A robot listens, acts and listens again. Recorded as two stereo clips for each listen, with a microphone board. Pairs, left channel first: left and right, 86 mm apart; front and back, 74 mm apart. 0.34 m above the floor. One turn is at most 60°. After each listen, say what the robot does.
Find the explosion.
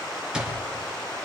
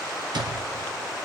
Keep listening.
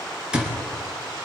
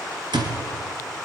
Keep listening.
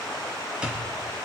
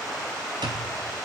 I can't make out an explosion to turn to.